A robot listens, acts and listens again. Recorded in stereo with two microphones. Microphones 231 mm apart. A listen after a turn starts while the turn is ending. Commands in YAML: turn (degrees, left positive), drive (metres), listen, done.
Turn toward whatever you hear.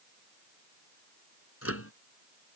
turn: 90
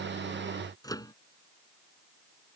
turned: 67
turn: 15
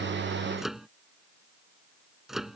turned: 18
done: "Facing the microwave."